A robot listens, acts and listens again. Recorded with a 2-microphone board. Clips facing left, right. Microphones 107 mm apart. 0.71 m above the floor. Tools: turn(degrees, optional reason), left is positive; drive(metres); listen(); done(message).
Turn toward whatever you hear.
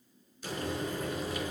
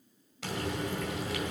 turn(degrees=-90)
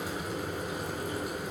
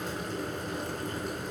turn(degrees=10, reason="So it is at 10° left.")
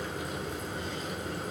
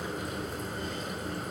done("Found it: frying, straight ahead.")